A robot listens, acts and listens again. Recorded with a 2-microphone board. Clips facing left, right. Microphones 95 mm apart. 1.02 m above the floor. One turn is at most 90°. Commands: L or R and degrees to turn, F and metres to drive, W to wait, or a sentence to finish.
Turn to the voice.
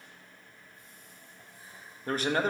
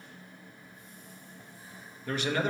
L40
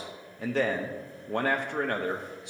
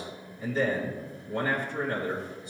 L90
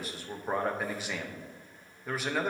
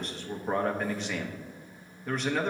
Found it: a man speaking, straight ahead, under 1 m away.